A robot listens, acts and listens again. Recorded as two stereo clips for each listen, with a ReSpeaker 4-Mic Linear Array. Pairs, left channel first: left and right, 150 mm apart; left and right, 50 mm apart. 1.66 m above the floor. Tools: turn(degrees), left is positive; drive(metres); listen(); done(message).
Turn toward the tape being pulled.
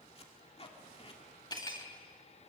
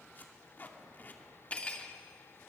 turn(degrees=40)
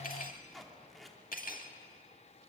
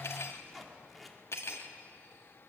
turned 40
done("Found it: tape being pulled, straight ahead, 2 to 4 m away.")